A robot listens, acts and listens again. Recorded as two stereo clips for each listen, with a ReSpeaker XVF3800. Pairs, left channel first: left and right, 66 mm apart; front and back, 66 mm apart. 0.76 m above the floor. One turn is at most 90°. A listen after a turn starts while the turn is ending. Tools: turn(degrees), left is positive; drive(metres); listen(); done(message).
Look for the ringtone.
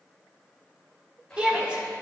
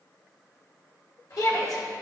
listen()
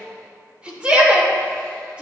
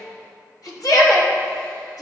listen()
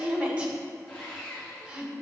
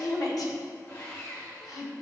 done("I can't make out a ringtone to turn to.")